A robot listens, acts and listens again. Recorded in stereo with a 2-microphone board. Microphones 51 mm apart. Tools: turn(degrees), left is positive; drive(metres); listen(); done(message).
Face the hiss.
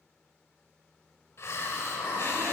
turn(degrees=55)
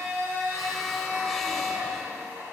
listen()
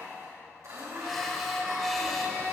done("Found it: a hiss, straight ahead, 1 to 2 m away.")